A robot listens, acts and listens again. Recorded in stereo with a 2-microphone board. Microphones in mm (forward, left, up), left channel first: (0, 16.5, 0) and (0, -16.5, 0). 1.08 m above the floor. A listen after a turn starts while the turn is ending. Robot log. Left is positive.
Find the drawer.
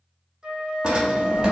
note: The drawer: about 25° right or 155° right.
cmd yaw -25
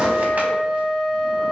cmd idle
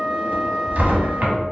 note: So it is at 125° right.
cmd yaw -125
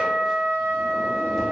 cmd idle
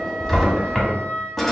end: Facing the drawer.